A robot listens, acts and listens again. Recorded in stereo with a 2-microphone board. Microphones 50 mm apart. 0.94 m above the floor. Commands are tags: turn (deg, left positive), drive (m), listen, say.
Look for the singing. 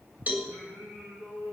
<turn deg="-75"/>
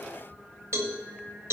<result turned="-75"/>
<turn deg="-25"/>
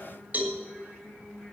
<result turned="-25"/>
<say>Found it: singing, straight ahead, over 4 m away.</say>